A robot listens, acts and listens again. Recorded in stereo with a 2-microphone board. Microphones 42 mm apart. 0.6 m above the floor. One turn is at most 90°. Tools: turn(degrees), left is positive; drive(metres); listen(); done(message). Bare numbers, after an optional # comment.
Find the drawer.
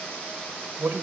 listen()
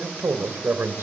listen()
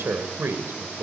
done("I can't make out a drawer to turn to.")